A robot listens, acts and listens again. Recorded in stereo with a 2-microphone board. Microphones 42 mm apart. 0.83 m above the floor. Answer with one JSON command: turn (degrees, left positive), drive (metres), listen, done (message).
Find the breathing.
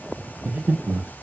{"turn": -55}
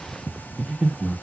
{"turn": -15}
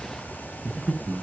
{"done": "Facing the breathing."}